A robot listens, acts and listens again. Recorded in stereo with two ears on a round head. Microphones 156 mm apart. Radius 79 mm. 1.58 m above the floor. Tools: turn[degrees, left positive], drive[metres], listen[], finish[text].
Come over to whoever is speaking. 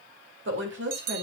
Thought: The woman speaking: about 65° right or 115° right.
Action: turn[-65]
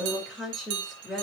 Action: drive[1.0]
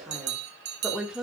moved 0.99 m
Action: drive[1.0]
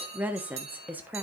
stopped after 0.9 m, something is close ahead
Thought: The woman speaking is now 10° right.
Action: turn[-10]
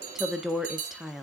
Action: finish[Arrived at the woman speaking, straight ahead.]